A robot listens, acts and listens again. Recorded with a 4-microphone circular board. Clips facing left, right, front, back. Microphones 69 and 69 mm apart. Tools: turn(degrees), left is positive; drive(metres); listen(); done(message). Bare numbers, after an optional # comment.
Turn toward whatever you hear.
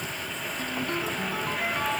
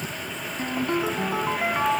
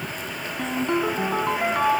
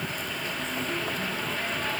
# The ringtone: 25° right.
turn(-25)
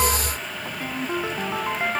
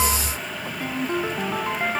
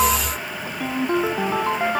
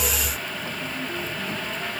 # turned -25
done("Found it: a ringtone, straight ahead.")